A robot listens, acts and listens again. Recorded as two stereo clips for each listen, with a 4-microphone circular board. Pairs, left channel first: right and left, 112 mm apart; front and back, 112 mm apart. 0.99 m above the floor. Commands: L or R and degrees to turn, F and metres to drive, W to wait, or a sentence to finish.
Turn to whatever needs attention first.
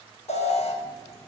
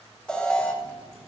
R85
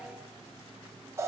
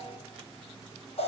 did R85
L25
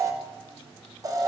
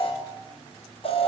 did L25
L30
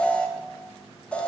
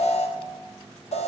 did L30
R10
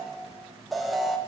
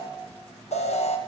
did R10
Found it: an alarm, straight ahead.